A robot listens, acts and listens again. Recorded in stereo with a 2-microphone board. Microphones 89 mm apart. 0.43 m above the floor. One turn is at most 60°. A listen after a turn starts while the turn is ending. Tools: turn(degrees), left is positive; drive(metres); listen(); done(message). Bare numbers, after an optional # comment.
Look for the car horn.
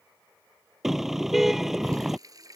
turn(-30)
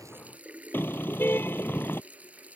# So it is at 25° left.
turn(25)
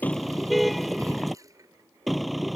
done("Facing the car horn.")